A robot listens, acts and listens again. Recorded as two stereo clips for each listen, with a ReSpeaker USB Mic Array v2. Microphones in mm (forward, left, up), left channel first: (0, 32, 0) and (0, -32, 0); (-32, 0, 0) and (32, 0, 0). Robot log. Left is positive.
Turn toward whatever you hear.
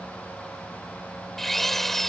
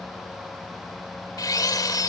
note: The drill: 175° left.
cmd yaw +175
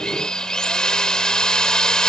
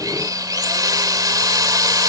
note: The drill is now 15° left.
cmd yaw +15
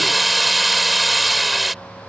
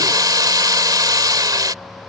end: Found it: a drill, straight ahead.